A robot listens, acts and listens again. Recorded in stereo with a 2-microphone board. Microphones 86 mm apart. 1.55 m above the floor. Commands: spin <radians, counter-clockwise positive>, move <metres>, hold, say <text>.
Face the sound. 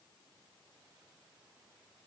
hold
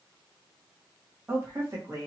spin -0.70
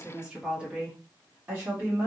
spin -0.52
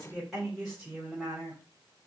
say Found it: a woman speaking, straight ahead.